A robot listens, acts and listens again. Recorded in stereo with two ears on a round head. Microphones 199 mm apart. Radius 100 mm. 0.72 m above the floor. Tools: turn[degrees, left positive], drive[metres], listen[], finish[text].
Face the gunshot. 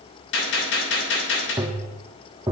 Thought: The gunshot: about 60° left or 120° left.
Action: turn[60]
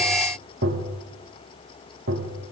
Action: listen[]
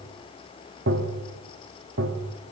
Action: finish[I heard a gunshot, but can't make it out now. It was about straight ahead or 60° left.]